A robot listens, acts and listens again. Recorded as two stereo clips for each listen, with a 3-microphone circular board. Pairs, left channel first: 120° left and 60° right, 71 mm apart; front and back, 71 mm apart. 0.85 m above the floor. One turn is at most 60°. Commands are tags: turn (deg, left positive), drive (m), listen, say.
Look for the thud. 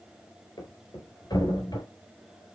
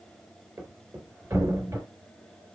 <turn deg="60"/>
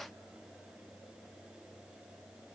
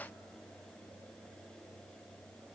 <turn deg="60"/>
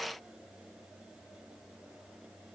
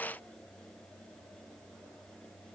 <turn deg="20"/>
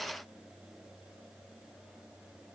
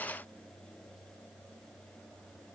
<say>Facing where the thud came from. I can't hear it now.</say>